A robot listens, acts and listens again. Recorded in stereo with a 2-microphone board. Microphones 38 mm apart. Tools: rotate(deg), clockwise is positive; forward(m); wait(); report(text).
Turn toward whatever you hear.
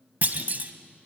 rotate(45)
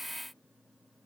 wait()
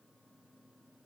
report("I heard a clunk, but can't make it out now. It was about straight ahead or 90° right.")